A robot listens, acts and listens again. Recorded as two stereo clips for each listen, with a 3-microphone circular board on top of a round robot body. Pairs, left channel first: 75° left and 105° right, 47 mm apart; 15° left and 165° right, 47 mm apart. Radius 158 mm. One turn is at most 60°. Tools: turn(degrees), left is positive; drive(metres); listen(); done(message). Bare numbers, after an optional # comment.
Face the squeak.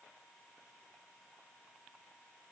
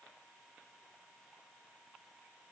listen()
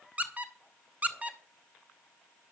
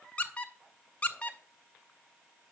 # The squeak: 45° right.
turn(-45)
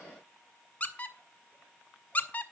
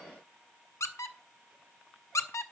# The squeak is now 15° left.
turn(15)
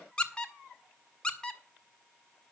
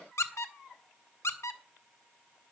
done("Found it: a squeak, straight ahead, 1 to 2 m away.")